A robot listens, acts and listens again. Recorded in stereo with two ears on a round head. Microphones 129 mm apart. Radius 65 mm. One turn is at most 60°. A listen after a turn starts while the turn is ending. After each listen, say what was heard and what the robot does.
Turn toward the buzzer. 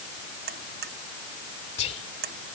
The buzzer: about 75° right or 105° right. Turn 60° right.
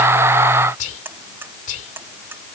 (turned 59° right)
So it is at 15° right. Turn 15° right.
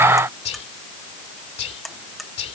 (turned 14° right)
Found it: a buzzer, straight ahead.